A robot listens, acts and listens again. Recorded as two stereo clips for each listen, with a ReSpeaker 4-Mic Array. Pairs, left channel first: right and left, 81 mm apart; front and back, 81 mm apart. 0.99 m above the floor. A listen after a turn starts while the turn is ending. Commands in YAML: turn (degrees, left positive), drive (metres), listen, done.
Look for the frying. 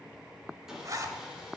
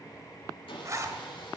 listen: true
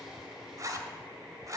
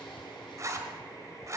listen: true
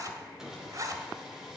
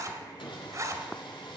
done: "I can't make out frying to turn to."